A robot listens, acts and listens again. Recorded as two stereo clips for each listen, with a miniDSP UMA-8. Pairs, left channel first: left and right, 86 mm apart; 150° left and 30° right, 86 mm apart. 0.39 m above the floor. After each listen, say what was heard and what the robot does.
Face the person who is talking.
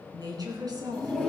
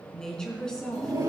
The woman speaking: 130° right. Turn 130° right.
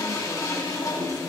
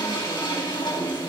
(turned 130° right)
Keep listening.
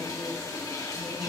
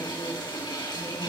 Keep listening.
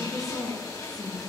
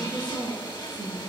Found it: a woman speaking, straight ahead.